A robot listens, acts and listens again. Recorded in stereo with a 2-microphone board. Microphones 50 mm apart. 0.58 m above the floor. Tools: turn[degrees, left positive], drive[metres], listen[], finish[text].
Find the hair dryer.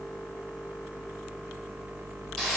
Action: listen[]
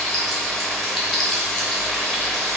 Action: listen[]
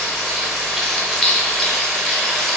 Action: finish[I can't make out a hair dryer, only frying.]